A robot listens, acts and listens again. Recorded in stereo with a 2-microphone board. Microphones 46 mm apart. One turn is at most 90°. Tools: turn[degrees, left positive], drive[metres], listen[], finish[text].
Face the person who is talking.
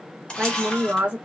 Thought: The woman speaking: about 25° right or 155° right.
Action: turn[-25]
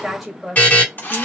Action: finish[Facing the woman speaking, 1 to 2 m away.]